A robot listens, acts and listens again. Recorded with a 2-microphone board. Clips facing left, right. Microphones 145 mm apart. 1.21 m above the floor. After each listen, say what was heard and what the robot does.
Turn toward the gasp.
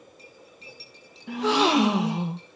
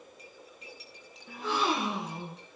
Turn 90° left.
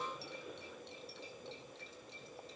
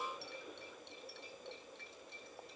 Facing where the gasp came from. I can't hear it now.